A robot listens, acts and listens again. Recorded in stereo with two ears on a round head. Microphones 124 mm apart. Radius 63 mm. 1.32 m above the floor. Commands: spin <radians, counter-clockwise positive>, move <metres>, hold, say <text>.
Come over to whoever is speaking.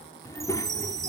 spin 0.44
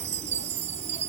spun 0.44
hold
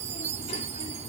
spin 2.27
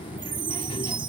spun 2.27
spin 0.61
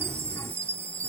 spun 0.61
hold
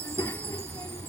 spin 0.35
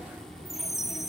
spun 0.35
move 1.0
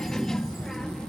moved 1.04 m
move 1.0
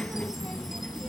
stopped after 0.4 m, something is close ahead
say I am next to the child speaking.